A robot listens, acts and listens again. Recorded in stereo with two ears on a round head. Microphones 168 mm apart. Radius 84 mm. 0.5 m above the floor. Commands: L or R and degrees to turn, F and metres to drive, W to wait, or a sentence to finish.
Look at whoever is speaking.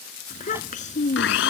L40
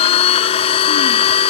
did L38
W
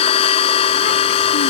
W
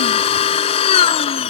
I heard a child speaking, but can't make it out now. It was about 5° left or 100° left.